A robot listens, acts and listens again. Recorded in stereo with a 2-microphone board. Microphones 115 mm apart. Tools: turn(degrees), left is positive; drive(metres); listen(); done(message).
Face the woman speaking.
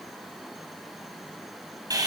listen()
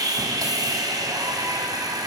listen()
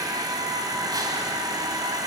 done("I can't make out a woman speaking, only sawing.")